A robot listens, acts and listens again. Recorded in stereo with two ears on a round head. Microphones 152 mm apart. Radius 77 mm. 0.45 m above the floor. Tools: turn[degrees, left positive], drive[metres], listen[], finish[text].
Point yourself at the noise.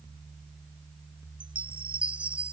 Action: turn[-30]
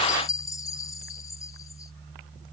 Thought: So it is at 25° left.
Action: turn[25]
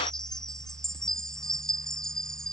Action: finish[Facing the chime.]